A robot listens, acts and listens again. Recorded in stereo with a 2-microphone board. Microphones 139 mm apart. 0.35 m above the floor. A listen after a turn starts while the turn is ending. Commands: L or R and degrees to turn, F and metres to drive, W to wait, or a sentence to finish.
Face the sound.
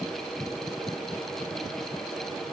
W
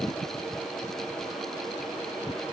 W
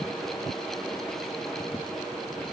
I can't make out anything.